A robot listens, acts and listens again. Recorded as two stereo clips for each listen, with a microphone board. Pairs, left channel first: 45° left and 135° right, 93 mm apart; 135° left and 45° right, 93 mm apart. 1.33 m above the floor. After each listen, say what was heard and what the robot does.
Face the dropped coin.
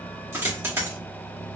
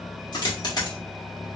The dropped coin: 165° left. Turn 165° left.
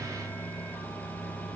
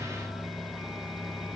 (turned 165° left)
Facing where the dropped coin came from. I can't hear it now.